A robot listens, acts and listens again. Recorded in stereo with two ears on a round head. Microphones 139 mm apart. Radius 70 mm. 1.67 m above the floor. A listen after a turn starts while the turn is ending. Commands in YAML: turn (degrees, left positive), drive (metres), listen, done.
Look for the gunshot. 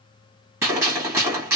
turn: -20
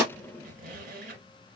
listen: true
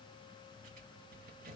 done: "I heard a gunshot, but can't make it out now. It was about straight ahead or 140° right."